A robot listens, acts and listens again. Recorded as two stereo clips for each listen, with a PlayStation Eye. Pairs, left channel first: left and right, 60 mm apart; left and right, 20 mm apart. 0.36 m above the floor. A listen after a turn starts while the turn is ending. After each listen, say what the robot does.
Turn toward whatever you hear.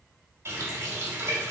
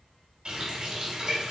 Turn 50° right.
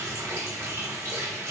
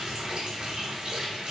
Turn 70° right.
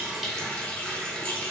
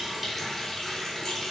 Turn 25° left.
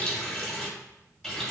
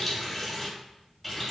Found it: a running tap, straight ahead, 1 to 2 m away.